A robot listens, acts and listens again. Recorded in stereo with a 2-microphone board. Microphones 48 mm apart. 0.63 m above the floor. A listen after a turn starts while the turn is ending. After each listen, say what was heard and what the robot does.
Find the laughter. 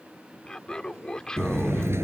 Turn 30° left.
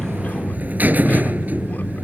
Keep listening.
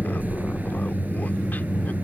Keep listening.
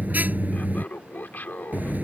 So it is at 135° left. Turn 135° left.
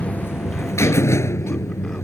Keep listening.
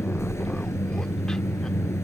Keep listening.
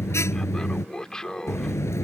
The laughter is now 15° left. Turn 15° left.
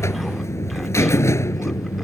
Keep listening.
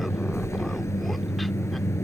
Keep listening.
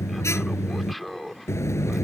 Found it: laughter, straight ahead.